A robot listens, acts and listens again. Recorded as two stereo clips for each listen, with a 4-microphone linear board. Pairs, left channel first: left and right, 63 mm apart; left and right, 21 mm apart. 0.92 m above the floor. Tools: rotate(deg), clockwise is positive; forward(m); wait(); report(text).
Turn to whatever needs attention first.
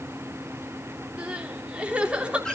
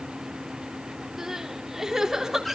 rotate(20)
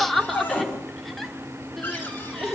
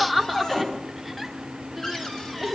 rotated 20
report("Facing the crying.")